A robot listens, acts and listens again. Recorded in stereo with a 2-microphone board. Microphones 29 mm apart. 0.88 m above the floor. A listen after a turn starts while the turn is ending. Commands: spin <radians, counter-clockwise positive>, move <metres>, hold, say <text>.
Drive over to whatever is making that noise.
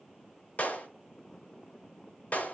spin 1.13
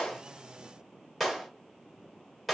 move 1.0
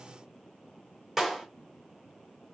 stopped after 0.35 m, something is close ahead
spin -0.17
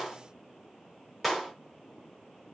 say Something is in my way. I am facing the clap but have not reached it.